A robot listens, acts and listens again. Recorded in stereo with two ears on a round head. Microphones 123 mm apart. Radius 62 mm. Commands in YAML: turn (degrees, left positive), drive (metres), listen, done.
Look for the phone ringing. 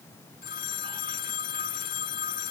turn: 90
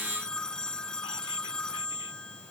done: "Found it: a phone ringing, straight ahead."